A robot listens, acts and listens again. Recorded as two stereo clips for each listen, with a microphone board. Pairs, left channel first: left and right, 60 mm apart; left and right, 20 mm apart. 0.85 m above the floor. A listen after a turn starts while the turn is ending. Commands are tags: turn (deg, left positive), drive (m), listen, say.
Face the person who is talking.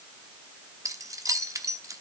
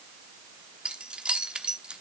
<listen/>
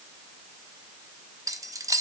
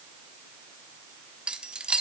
<listen/>
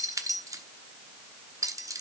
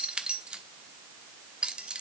<say>I can't make out anyone speaking, only keys jangling.</say>